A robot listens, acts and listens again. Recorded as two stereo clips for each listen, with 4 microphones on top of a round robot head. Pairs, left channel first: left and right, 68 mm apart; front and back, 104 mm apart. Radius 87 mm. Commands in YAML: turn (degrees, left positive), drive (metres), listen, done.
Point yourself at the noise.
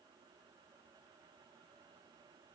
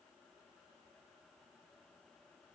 listen: true
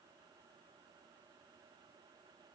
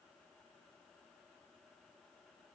listen: true
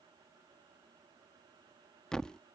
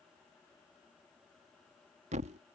turn: 170
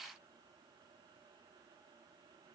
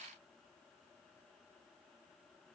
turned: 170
done: "I heard a thud from this way, but can't make it out now."